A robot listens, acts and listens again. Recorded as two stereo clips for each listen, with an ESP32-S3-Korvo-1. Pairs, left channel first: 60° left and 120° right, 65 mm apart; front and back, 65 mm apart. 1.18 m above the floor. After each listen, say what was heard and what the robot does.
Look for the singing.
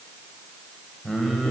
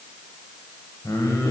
The singing: 20° right. Turn 20° right.
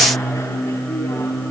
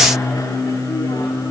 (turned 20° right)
The singing is now 15° right. Turn 15° right.
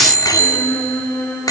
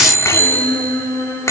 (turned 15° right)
Facing the singing.